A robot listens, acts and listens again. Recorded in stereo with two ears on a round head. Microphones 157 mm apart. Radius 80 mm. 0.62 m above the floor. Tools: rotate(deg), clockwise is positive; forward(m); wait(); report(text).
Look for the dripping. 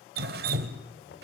rotate(55)
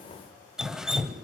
report("Facing the dripping, 1 to 2 m away.")